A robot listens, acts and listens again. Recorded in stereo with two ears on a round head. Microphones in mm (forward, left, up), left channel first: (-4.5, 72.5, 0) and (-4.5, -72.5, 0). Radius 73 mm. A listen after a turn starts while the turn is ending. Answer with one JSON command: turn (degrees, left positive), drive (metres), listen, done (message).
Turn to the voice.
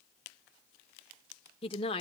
{"turn": 35}
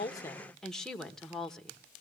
{"done": "Facing the woman speaking, 1 to 2 m away."}